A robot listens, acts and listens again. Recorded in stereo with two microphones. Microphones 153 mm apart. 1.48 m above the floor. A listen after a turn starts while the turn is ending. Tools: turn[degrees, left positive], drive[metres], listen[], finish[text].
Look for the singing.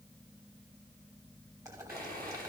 Action: listen[]
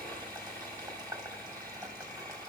Action: listen[]
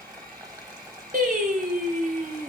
Thought: The singing: about 65° right or 115° right.
Action: turn[-65]
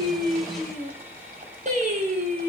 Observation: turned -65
Thought: So it is at 50° right.
Action: turn[-50]
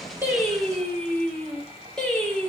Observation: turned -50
Action: finish[Facing the singing.]